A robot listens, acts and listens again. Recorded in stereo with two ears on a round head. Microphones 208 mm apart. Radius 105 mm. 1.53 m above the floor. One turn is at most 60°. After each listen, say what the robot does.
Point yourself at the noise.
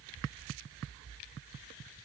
Keep listening.
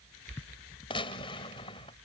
Turn 20° left.
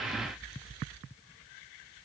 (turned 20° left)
Keep listening.
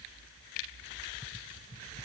I heard a gunshot, but can't make it out now. It was about straight ahead or 140° left.